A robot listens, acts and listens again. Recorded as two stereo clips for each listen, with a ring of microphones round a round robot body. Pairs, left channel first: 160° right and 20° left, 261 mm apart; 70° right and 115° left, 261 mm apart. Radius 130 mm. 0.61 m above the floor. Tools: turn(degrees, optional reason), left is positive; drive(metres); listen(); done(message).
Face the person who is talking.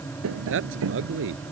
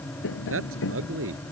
turn(degrees=70, reason="The man speaking: 70° left.")
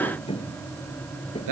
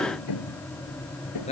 done("Facing the man speaking.")